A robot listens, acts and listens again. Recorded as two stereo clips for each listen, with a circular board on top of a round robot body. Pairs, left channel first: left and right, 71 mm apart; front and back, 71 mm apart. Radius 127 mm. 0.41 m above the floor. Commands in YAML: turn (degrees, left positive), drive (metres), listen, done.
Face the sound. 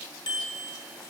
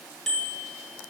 turn: 85
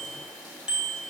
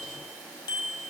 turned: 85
turn: -10
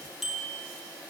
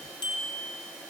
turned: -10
done: "Found it: a bicycle bell, straight ahead."